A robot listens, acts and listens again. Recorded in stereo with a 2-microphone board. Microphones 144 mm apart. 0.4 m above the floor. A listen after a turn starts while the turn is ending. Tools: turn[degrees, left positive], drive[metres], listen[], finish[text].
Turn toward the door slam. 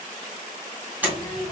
Action: turn[-30]
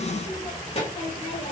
Action: listen[]
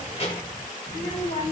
Action: finish[I heard a door slam, but can't make it out now. It was about 20° left or 140° right.]